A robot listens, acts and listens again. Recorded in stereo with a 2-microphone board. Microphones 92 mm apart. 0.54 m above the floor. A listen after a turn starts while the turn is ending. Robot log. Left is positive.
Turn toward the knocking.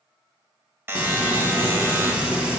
cmd idle
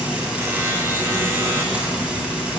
cmd idle
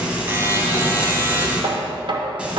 note: The knocking: about 60° right or 120° right.
cmd yaw -60
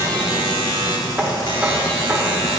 cmd idle
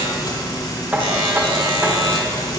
note: So it is at 20° right.
cmd yaw -20
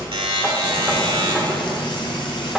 cmd idle
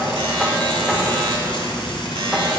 cmd idle
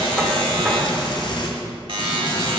end: I heard knocking from this way, but can't make it out now.